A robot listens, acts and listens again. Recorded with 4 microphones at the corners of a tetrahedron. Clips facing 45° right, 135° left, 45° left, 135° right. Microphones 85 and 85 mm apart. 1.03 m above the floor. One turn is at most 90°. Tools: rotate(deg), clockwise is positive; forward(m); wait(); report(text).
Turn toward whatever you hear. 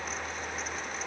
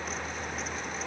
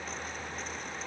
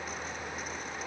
wait()
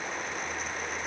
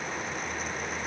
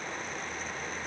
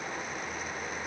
wait()
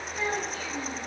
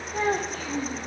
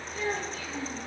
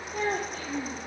rotate(-90)
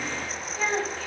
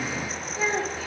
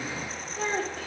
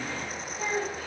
rotate(-55)
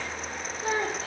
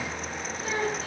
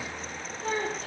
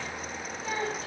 report("Found it: a child speaking, straight ahead, 1 to 2 m away.")